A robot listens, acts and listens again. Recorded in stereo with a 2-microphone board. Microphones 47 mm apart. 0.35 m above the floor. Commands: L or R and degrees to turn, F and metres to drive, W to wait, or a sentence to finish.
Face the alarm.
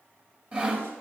W
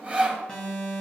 L15
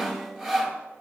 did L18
W
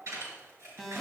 Found it: an alarm, straight ahead.